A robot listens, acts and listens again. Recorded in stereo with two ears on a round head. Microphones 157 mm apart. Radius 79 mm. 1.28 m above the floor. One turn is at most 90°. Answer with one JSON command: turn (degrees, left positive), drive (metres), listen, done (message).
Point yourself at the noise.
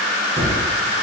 {"turn": -30}
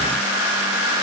{"listen": true}
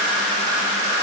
{"done": "I heard a gunshot, but can't make it out now. It was about straight ahead or 120° right."}